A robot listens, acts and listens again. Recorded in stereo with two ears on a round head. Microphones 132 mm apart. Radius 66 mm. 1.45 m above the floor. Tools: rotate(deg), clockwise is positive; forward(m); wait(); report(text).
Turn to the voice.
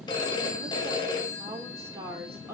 rotate(30)
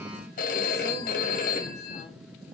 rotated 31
wait()
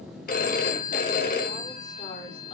rotate(-35)
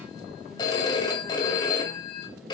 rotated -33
wait()
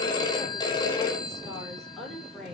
report("Facing the woman speaking, over 4 m away.")